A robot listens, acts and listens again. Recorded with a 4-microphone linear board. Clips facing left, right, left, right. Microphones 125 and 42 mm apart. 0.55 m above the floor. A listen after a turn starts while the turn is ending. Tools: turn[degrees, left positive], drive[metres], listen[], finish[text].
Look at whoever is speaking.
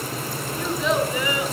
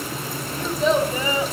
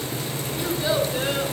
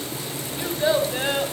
Thought: The child speaking: about 35° right or 145° right.
Action: turn[-35]
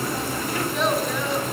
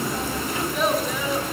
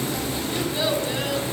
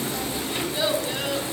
Action: finish[Found it: a child speaking, straight ahead.]